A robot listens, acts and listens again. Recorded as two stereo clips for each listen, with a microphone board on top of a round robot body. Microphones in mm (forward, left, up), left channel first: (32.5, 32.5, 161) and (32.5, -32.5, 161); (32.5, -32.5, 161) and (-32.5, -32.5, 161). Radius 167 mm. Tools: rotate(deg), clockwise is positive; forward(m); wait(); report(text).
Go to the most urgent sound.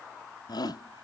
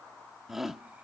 rotate(-95)
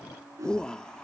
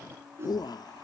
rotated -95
rotate(-10)
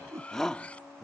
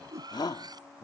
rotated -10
forward(1.0)
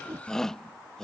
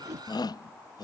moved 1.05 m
rotate(-10)
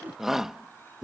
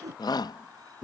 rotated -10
forward(1.0)
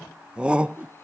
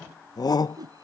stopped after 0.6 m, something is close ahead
rotate(15)
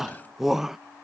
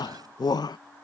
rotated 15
report("Arrived at the shout, straight ahead.")